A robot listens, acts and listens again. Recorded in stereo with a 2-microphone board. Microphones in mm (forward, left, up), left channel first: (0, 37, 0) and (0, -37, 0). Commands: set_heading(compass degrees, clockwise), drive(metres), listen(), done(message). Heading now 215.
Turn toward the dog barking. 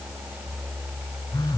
listen()
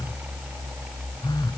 listen()
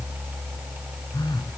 done("I can't make out a dog barking, only a phone buzzing.")